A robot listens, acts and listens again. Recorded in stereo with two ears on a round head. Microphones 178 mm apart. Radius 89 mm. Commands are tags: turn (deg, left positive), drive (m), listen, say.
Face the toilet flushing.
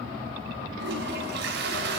<turn deg="-65"/>
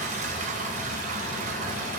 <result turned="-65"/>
<turn deg="-45"/>
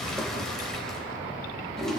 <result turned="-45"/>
<say>Found it: a toilet flushing, straight ahead, 2 to 4 m away.</say>